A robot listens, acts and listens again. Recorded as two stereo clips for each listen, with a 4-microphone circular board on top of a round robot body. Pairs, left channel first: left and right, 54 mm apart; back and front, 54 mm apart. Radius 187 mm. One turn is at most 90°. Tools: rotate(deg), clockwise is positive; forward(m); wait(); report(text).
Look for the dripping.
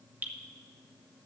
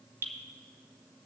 rotate(25)
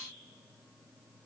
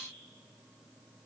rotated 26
wait()
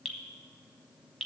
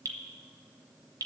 report("Found it: dripping, straight ahead, 1 to 2 m away.")